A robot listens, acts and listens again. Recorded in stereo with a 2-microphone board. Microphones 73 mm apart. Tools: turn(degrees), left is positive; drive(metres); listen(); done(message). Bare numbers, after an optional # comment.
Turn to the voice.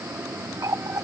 listen()
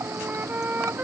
listen()
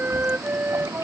done("I can't make out anyone speaking to turn to.")